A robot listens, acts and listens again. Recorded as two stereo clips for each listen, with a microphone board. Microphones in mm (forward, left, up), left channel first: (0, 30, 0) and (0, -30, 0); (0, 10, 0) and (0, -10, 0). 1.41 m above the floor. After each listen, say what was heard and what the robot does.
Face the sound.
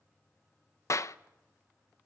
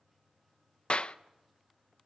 The clap: about 55° left or 125° left. Turn 55° left.
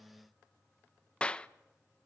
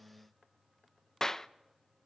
So it is at 20° left. Turn 20° left.
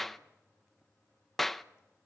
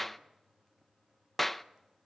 Found it: a clap, straight ahead, under 1 m away.